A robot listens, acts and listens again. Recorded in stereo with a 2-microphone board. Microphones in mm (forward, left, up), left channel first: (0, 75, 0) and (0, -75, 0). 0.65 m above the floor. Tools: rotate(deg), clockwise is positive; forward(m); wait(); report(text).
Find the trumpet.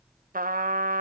rotate(70)
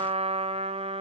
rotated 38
rotate(45)
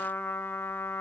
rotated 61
rotate(-15)
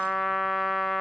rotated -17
report("Facing the trumpet.")